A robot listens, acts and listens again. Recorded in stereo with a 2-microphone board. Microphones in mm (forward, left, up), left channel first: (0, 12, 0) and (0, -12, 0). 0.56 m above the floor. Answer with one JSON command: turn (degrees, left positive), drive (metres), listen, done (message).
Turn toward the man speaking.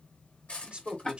{"turn": -55}
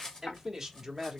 {"turn": -20}
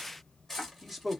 {"done": "Found it: a man speaking, straight ahead, 1 to 2 m away."}